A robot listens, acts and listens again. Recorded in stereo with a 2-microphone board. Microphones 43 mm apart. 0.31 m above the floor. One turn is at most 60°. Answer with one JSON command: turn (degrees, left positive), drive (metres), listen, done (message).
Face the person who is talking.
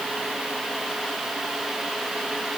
{"listen": true}
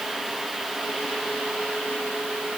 {"listen": true}
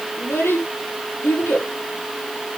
{"turn": 60}
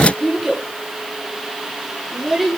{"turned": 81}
{"done": "Facing the child speaking."}